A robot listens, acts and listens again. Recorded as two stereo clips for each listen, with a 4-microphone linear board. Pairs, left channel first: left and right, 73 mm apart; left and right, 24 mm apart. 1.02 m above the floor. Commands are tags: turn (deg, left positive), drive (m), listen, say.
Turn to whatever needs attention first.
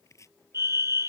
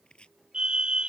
<turn deg="-40"/>
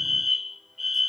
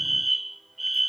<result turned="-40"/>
<say>Facing the fire alarm.</say>